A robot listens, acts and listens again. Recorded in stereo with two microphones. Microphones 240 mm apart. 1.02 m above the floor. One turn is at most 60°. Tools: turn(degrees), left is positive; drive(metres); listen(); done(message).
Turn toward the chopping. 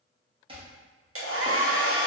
turn(degrees=-20)
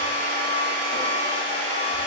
listen()
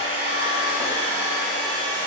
listen()
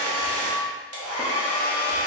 done("I heard chopping, but can't make it out now. It was about straight ahead or 140° right.")